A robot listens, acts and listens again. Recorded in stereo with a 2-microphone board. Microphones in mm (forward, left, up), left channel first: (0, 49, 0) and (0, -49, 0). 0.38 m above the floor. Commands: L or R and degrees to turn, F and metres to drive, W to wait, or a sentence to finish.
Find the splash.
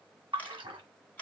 R55
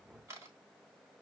W
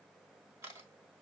I heard a splash, but can't make it out now. It was about straight ahead or 70° right.